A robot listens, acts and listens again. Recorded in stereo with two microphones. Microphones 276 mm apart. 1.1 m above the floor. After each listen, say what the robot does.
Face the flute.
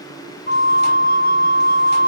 Turn 35° left.
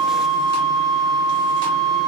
Found it: a flute, straight ahead, under 1 m away.